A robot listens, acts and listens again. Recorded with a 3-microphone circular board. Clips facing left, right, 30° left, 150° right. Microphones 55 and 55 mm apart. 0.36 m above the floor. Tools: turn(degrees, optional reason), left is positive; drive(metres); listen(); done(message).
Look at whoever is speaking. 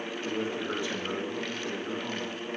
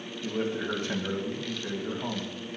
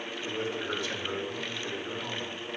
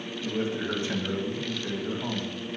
turn(degrees=-95, reason="The man speaking: 95° right.")
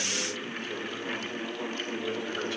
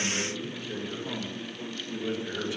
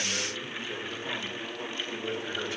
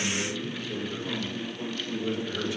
turn(degrees=-15, reason="The man speaking is now 15° right.")
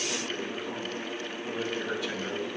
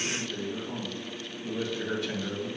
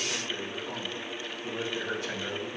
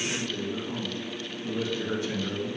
done("Facing the man speaking.")